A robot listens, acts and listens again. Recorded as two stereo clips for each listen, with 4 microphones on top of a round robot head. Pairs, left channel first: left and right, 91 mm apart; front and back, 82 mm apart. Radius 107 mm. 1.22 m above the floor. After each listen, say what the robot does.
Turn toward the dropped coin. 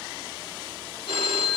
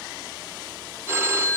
Keep listening.
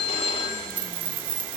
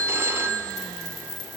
Turn 60° right.
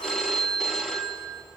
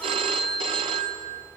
I heard a dropped coin from this way, but can't make it out now.